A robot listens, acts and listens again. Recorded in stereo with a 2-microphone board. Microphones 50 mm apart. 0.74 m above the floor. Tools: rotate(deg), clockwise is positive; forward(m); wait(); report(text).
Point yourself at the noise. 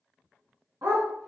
rotate(70)
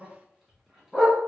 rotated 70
report("Found it: a dog barking, straight ahead.")